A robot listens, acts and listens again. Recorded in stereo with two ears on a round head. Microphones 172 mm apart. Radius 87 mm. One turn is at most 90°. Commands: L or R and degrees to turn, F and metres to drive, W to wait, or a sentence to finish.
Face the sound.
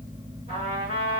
R35
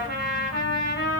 R90
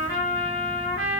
R65
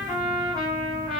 R25
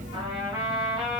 R25
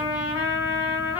L20
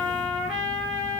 Found it: a trumpet, straight ahead, 2 to 4 m away.